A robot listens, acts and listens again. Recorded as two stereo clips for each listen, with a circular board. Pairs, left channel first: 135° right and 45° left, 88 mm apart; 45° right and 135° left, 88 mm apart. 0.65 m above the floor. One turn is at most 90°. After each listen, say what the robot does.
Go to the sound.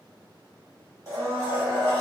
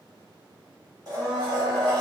Turn 90° left.
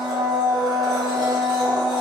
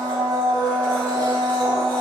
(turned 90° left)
Turn 25° left.
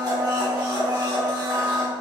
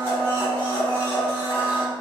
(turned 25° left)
Drive 1.0 m forward.
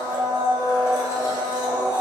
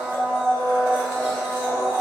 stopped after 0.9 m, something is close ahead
Turn 10° left.
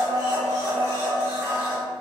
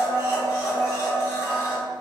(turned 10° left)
I am next to the blender.